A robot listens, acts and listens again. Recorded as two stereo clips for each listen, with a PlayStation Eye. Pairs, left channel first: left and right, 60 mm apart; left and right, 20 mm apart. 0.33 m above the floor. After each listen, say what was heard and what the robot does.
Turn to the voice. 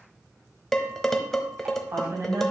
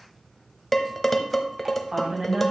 The woman speaking: about 55° right or 125° right. Turn 55° right.
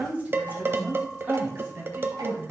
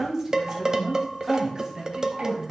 So it is at 40° right. Turn 40° right.
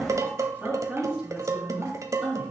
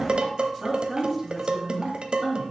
Facing the woman speaking.